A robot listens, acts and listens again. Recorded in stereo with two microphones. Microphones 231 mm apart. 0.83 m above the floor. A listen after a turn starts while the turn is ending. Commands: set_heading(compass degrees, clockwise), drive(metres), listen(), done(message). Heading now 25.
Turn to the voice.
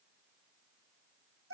listen()
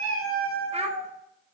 set_heading(50)
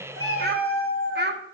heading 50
set_heading(175)
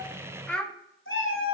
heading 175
done("Facing the child speaking, 1 to 2 m away.")